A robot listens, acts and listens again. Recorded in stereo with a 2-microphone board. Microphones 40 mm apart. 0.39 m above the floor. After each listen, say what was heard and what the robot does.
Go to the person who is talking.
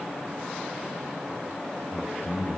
The man speaking: about 50° left or 130° left. Turn 50° left.
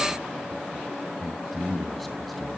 Drive 1.0 m forward.
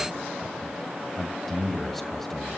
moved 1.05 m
Drive 1.0 m forward.
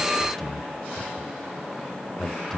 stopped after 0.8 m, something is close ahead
The man speaking is now 10° left. Turn 10° left.
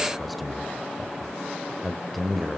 Arrived at the man speaking, straight ahead.